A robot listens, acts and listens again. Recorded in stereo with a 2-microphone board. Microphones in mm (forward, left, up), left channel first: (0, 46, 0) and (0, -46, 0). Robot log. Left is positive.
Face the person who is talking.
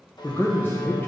note: The man speaking: about 20° left or 160° left.
cmd yaw +20
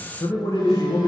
note: So it is at 135° left.
cmd yaw +135
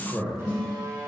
note: The man speaking is now 10° left.
cmd yaw +10
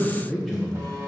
end: Facing the man speaking.